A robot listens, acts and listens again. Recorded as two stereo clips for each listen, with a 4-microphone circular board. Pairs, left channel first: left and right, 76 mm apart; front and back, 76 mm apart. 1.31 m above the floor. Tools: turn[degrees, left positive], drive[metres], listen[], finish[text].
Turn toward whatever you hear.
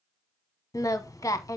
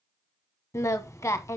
Thought: The singing: 45° left.
Action: turn[45]
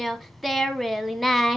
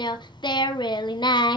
Action: finish[Found it: singing, straight ahead, under 1 m away.]